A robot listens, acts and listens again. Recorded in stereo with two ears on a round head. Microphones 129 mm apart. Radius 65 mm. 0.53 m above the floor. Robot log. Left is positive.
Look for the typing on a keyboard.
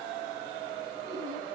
cmd idle
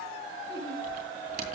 note: The typing on a keyboard: about 60° right or 120° right.
cmd yaw -60
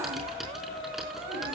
end: Found it: typing on a keyboard, straight ahead, over 4 m away.